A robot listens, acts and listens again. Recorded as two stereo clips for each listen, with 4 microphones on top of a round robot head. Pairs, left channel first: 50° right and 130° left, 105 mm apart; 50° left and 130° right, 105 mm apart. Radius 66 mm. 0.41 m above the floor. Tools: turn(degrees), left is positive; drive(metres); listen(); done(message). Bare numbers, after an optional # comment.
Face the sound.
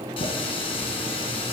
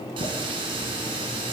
# The running tap: 85° right.
turn(-85)
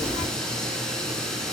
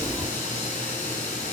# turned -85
# The running tap is now 40° left.
turn(40)
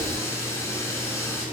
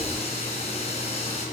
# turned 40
# The running tap is now 20° left.
turn(20)
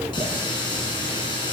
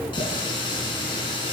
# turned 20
done("Found it: a running tap, straight ahead.")